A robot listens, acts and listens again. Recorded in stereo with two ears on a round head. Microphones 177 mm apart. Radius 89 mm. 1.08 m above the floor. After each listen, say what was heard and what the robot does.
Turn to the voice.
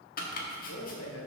Turn 90° left.
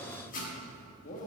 So it is at 40° left. Turn 40° left.
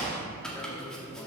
The man speaking is now 20° left. Turn 20° left.
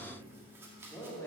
The man speaking is now 10° left. Turn 10° left.
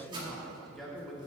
Found it: a man speaking, straight ahead.